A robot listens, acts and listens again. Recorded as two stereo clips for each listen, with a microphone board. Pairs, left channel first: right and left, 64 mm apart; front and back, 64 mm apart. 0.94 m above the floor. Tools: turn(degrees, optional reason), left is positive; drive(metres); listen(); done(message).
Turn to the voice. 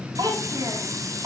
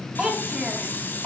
turn(degrees=100, reason="The child speaking: 100° left.")
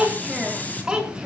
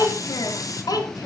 turn(degrees=15, reason="The child speaking is now 15° left.")
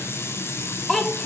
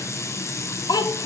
done("Found it: a child speaking, straight ahead.")